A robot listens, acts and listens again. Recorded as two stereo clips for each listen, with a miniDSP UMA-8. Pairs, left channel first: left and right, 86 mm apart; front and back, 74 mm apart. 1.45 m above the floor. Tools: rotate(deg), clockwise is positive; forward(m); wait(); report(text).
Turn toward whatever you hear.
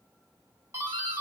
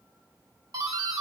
rotate(150)
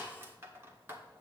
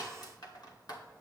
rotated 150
rotate(30)
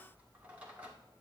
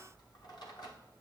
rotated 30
wait()
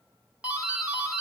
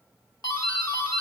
rotate(15)
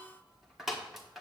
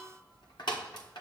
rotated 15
report("Found it: a doorbell, straight ahead, 1 to 2 m away.")